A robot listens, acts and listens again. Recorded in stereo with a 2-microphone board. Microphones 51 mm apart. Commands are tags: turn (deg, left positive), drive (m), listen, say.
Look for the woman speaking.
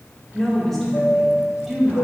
<turn deg="-30"/>
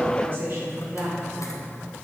<turn deg="-125"/>
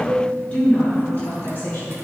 <turn deg="35"/>
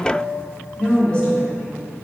<turn deg="10"/>
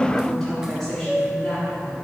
<say>Facing the woman speaking.</say>